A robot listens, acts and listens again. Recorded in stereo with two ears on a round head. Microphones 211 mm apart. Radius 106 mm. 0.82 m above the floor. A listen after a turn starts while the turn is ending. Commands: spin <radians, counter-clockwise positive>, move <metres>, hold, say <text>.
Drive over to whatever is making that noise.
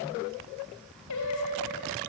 spin 1.57
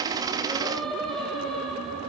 move 1.0
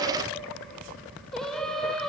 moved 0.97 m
move 1.0
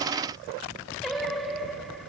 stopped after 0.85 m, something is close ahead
say Arrived at the singing, straight ahead.